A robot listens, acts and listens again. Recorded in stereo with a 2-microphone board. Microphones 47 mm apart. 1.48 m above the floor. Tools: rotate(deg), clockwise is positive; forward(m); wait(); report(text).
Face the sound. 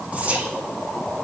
rotate(25)
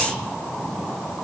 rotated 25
wait()
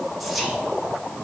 report("Facing the whispering.")